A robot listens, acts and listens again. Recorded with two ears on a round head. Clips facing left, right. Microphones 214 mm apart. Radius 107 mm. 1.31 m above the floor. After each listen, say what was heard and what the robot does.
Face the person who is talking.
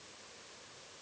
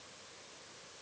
Keep listening.
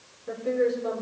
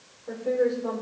The woman speaking: about 25° left or 155° left. Turn 25° left.
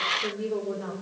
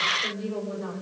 So it is at 130° left. Turn 130° left.
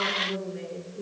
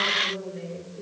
The woman speaking is now 35° left. Turn 35° left.
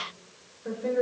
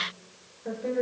The woman speaking is now 10° left. Turn 10° left.
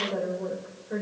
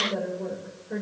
Facing the woman speaking.